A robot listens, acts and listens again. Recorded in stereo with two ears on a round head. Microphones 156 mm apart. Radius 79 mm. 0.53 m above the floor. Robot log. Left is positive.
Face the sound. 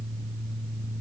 cmd idle
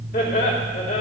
note: The laughter: about 45° left or 135° left.
cmd yaw +45
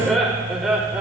end: Facing the laughter, 2 to 4 m away.